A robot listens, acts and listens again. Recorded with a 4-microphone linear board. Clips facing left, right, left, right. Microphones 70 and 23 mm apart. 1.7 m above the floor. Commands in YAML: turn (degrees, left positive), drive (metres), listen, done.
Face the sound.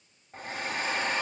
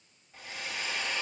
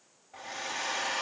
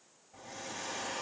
turn: 45
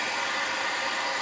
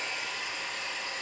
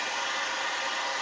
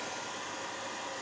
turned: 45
turn: 85
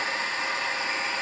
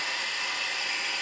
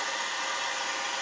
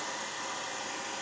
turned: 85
turn: 35
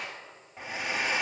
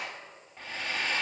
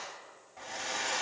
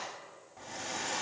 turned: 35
turn: 15
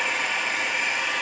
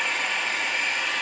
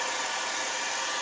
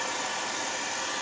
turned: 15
done: "Facing the hair dryer."